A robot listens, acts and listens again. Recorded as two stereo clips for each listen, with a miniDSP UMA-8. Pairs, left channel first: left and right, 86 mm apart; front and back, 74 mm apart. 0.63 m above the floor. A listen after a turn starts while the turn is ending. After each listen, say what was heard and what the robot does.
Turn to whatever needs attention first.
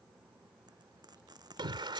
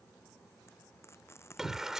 The shout: 95° right. Turn 95° right.
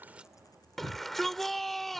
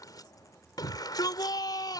Found it: a shout, straight ahead.